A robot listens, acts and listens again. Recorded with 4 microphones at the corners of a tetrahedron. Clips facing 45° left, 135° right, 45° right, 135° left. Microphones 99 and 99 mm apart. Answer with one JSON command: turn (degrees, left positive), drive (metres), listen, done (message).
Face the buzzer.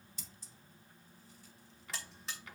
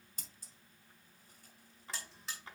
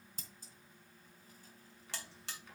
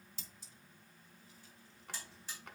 {"turn": -45}
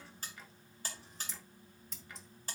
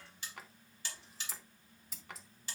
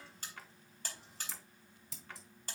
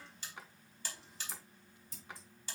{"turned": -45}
{"done": "Found it: a buzzer, straight ahead, 2 to 4 m away."}